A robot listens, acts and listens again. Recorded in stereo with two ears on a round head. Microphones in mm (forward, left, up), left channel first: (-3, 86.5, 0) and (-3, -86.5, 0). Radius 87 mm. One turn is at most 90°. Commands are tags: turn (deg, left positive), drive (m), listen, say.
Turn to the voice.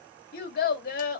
<turn deg="50"/>
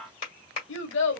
<turn deg="75"/>
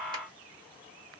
<listen/>
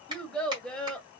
<say>Facing the child speaking.</say>